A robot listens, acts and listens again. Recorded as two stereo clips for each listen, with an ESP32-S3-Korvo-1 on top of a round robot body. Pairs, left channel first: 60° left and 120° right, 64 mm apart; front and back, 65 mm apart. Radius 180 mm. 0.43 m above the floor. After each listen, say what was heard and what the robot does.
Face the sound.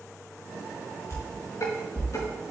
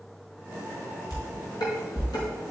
The dishes clattering: 20° left. Turn 20° left.
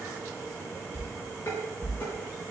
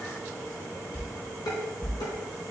Found it: dishes clattering, straight ahead, over 4 m away.